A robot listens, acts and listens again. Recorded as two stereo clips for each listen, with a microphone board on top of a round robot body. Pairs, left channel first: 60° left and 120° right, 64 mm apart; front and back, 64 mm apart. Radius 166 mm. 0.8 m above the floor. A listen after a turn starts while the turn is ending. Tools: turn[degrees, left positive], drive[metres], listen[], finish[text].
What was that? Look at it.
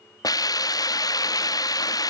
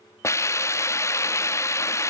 Thought: The hiss: 45° left.
Action: turn[45]
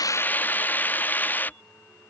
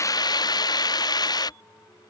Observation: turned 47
Action: finish[Facing the hiss.]